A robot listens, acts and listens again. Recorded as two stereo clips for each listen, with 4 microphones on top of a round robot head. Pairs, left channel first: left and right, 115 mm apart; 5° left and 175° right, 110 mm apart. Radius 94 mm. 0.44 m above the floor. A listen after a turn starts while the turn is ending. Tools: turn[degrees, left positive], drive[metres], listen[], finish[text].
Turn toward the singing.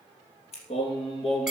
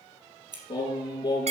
Thought: The singing: 60° left.
Action: turn[60]
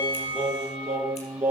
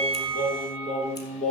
Thought: The singing is now 10° right.
Action: turn[-10]
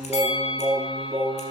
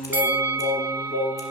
Action: finish[Facing the singing, 2 to 4 m away.]